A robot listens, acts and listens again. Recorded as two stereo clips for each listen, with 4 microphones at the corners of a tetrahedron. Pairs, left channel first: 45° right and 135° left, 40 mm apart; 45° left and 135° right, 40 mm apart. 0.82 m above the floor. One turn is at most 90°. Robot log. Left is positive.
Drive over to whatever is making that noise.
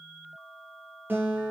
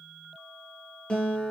note: The guitar: 105° left.
cmd yaw +90
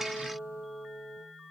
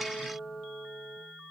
note: The guitar is now 65° left.
cmd yaw +65
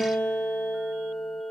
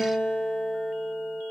note: The guitar is now 20° left.
cmd yaw +20
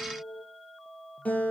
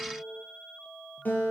cmd fwd 1.0
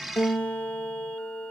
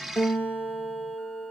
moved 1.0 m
cmd fwd 1.0
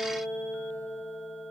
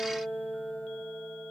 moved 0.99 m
cmd fwd 1.0
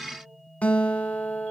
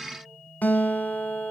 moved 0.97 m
cmd fwd 1.0
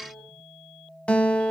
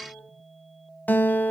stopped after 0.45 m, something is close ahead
note: The guitar is now 10° left.
cmd yaw +10
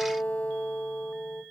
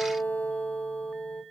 end: I am next to the guitar.